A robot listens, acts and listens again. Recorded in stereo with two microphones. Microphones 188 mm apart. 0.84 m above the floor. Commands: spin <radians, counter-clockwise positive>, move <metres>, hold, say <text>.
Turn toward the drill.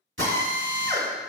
spin -1.57
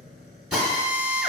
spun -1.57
say Found it: a drill, straight ahead, 1 to 2 m away.